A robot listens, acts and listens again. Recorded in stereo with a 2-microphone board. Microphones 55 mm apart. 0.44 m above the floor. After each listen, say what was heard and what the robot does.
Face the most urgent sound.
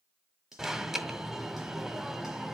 Turn 30° right.
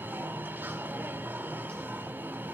So it is at 140° right. Turn 140° right.
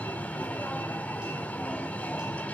The alarm is now 30° left. Turn 30° left.
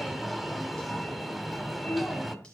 Facing the alarm, 1 to 2 m away.